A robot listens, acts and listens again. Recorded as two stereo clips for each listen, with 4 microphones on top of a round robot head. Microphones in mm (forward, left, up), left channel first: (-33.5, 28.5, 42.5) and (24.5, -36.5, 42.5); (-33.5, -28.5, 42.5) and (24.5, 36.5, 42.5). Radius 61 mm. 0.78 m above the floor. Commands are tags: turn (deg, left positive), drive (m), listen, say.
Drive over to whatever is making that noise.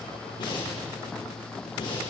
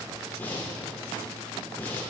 <turn deg="160"/>
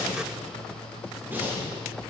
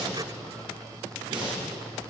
<turn deg="20"/>
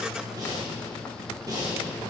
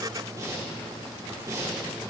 <drive m="1.0"/>
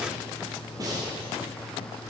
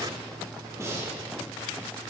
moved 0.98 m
<drive m="1.0"/>
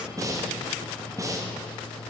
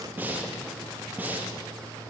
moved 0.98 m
<turn deg="-15"/>
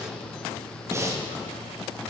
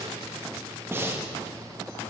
<drive m="1.0"/>
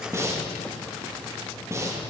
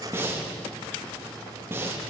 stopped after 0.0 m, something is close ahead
<say>Arrived at the breathing, straight ahead.</say>